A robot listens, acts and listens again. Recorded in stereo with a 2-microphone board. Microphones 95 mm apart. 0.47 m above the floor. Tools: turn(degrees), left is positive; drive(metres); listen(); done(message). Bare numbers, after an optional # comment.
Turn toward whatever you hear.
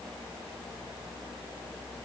listen()
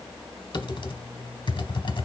# The typing on a keyboard: about 55° left or 125° left.
turn(55)
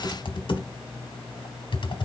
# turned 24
# So it is at 80° left.
turn(80)
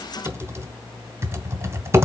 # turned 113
# The typing on a keyboard is now 30° right.
turn(-30)
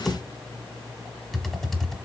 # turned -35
done("Facing the typing on a keyboard.")